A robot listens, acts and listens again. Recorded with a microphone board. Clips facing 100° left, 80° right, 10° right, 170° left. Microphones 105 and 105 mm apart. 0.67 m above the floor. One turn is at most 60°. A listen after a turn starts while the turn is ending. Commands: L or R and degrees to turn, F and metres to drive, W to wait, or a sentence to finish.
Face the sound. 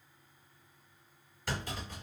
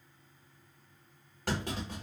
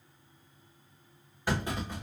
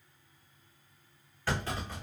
R60
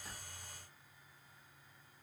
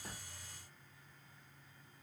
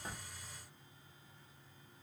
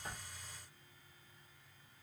R25
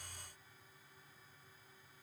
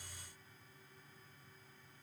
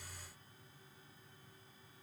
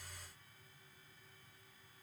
I heard a clunk from this way, but can't make it out now.